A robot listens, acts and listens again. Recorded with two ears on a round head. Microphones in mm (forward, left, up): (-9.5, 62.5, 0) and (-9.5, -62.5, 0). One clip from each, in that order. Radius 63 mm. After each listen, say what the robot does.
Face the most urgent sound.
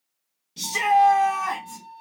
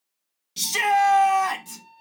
Turn 55° right.
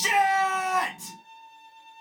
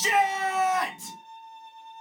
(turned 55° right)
Facing the shout, 1 to 2 m away.